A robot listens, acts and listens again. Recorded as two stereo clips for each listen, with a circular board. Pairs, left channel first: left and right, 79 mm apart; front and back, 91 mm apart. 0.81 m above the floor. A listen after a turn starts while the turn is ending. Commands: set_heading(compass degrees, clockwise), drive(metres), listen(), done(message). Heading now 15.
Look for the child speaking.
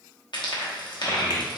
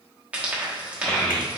set_heading(305)
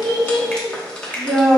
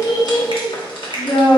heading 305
set_heading(325)
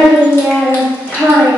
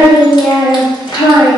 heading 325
done("Facing the child speaking.")